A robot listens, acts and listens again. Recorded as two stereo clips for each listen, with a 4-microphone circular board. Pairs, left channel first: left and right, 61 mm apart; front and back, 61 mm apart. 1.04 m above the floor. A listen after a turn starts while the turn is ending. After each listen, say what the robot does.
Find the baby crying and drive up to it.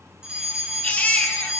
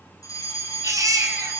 Turn 155° left.
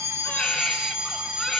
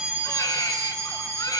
Keep listening.
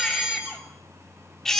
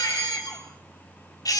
Drive 1.0 m forward.
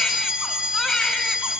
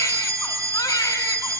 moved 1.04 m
Turn 10° left.
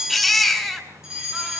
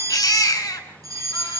Drive 1.0 m forward.
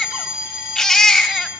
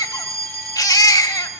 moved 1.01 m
Drive 1.0 m forward.
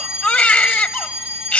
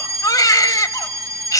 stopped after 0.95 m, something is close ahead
Turn 15° left.
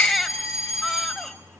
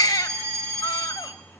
I am next to the baby crying.